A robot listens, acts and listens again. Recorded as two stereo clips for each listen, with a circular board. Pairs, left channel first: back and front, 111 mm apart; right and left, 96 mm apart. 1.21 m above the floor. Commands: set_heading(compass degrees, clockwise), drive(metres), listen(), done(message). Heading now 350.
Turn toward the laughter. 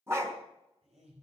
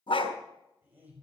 set_heading(330)
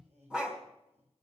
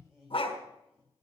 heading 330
done("Facing the laughter, over 4 m away.")